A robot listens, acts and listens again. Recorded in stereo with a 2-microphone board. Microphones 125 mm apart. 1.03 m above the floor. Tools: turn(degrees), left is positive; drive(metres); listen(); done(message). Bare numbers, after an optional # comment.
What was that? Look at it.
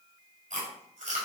# The chewing: about 75° right or 105° right.
turn(-75)
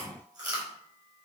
# So it is at 30° right.
turn(-30)
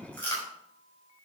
# The chewing is now 15° left.
turn(15)
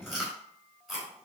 done("Found it: chewing, straight ahead, over 4 m away.")